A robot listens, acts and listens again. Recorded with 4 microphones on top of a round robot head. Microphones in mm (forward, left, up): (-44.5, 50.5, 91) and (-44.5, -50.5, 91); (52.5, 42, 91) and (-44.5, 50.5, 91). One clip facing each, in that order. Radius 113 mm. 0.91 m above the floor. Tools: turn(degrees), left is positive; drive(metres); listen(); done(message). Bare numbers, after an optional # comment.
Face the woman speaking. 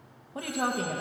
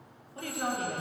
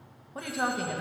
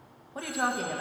# The woman speaking: 85° left.
turn(85)
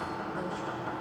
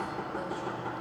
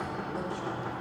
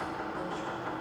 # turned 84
listen()
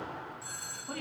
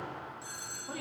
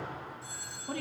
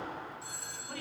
# The woman speaking is now 10° right.
turn(-10)
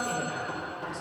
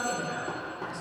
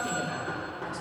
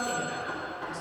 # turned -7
done("Found it: a woman speaking, straight ahead, 2 to 4 m away.")